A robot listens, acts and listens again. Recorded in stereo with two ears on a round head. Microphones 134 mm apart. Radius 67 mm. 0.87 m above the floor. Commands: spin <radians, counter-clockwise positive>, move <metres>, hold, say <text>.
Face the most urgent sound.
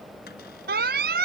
spin -1.57
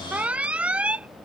spin -0.17
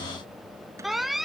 say Found it: an alarm, straight ahead.